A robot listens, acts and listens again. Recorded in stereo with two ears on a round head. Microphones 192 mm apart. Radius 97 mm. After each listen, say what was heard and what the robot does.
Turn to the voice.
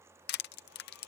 Keep listening.
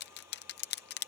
Keep listening.
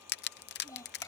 Turn 30° left.
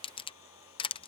Keep listening.
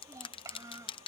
So it is at 15° right. Turn 15° right.
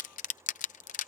Keep listening.
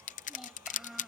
Facing the child speaking.